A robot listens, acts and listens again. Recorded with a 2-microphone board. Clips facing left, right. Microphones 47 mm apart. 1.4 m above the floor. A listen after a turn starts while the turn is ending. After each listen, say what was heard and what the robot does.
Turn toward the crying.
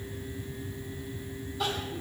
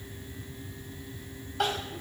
The crying: about 70° right or 110° right. Turn 70° right.
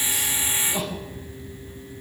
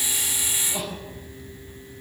Found it: crying, straight ahead, 2 to 4 m away.